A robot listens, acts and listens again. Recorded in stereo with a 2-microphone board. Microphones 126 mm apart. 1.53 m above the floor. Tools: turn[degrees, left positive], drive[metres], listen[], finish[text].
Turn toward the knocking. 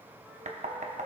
Action: turn[-90]
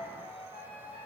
Thought: So it is at 15° right.
Action: turn[-15]
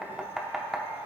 Action: finish[Found it: knocking, straight ahead.]